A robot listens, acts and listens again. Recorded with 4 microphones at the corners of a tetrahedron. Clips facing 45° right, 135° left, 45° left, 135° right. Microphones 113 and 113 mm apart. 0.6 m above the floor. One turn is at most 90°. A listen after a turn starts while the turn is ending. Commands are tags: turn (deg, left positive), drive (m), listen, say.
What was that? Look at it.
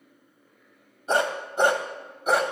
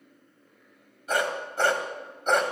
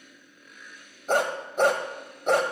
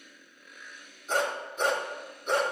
<turn deg="45"/>
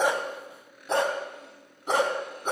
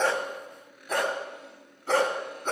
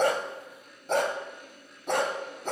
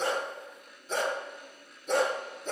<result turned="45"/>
<turn deg="35"/>
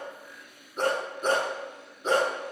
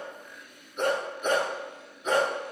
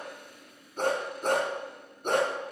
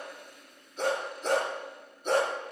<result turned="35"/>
<turn deg="10"/>
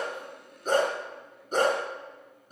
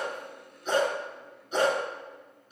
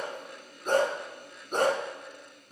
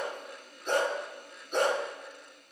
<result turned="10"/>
<say>Found it: a dog barking, straight ahead, 2 to 4 m away.</say>